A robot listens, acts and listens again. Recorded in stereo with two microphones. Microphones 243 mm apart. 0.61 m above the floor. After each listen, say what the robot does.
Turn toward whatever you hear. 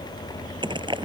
Turn 20° right.
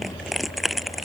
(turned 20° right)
Facing the crushing.